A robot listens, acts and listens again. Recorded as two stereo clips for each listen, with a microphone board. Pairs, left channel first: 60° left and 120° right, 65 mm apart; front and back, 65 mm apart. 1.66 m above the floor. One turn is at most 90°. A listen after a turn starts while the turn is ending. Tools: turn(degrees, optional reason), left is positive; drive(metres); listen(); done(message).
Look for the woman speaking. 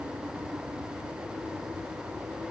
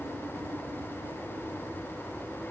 listen()
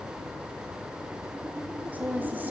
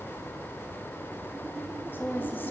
turn(degrees=-60, reason="The woman speaking: 60° right.")
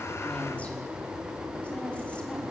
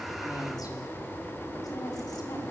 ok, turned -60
listen()
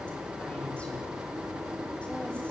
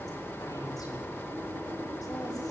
listen()
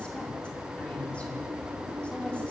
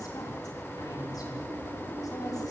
done("I heard a woman speaking from this way, but can't make it out now.")